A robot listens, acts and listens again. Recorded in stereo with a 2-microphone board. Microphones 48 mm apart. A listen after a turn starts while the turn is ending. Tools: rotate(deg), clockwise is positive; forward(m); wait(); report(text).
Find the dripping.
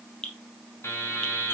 rotate(-20)
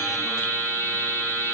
wait()
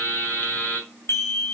wait()
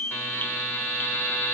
report("I heard dripping, but can't make it out now. It was about straight ahead or 140° left.")